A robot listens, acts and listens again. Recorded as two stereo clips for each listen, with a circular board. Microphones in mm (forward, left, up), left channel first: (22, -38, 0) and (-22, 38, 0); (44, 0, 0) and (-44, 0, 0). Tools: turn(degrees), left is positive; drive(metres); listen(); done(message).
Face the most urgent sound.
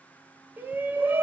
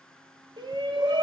turn(degrees=-175)
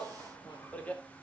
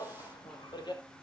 turn(degrees=10)
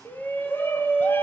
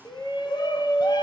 done("Facing the shout, 2 to 4 m away.")